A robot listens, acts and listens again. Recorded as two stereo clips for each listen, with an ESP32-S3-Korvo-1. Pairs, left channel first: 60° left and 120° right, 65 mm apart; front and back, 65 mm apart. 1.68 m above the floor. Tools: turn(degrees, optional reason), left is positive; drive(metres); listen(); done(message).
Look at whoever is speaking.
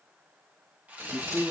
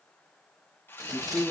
turn(degrees=-130, reason="The man speaking: 130° right.")
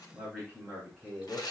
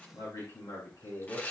turn(degrees=-20, reason="The man speaking is now 20° right.")
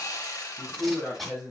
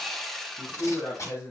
done("Found it: a man speaking, straight ahead, 2 to 4 m away.")